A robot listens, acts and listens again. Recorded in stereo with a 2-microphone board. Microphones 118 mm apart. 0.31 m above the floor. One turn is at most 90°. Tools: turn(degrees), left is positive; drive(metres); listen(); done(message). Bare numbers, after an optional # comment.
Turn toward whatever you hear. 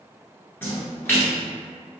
# The splash: about 20° left or 160° left.
turn(20)
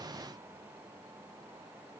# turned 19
listen()
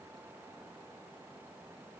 done("I heard a splash, but can't make it out now. It was about straight ahead or 145° left.")